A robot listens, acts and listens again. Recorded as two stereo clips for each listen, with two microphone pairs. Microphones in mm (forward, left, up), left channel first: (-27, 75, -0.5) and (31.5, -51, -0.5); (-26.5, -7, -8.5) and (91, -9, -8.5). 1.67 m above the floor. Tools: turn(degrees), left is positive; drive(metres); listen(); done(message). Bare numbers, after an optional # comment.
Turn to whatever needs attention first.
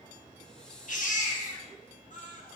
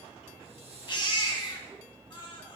# The baby crying: 130° left.
turn(130)
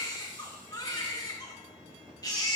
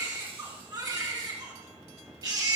# The baby crying is now 55° left.
turn(55)
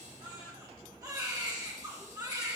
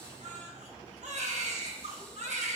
done("Found it: a baby crying, straight ahead, 1 to 2 m away.")